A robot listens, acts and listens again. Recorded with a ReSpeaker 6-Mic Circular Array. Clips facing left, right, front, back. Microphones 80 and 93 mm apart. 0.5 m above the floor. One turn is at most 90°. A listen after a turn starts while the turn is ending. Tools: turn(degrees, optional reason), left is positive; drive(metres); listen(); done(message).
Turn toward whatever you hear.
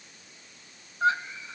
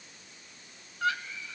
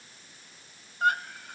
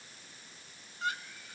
turn(degrees=30, reason="The scream: 30° left.")
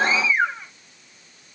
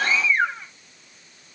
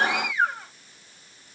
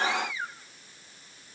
done("Facing the scream.")